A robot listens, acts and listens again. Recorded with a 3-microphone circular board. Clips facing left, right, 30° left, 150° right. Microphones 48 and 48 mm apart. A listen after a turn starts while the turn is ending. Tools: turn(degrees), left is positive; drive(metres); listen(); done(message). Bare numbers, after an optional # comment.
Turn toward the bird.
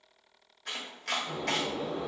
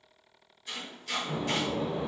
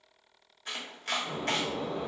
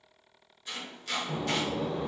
# The bird: 35° right.
turn(-35)
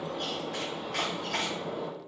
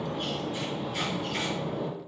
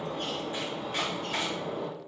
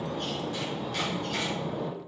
# The bird is now 15° right.
turn(-15)
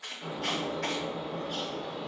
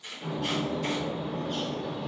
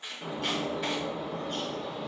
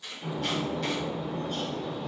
done("Facing the bird, 1 to 2 m away.")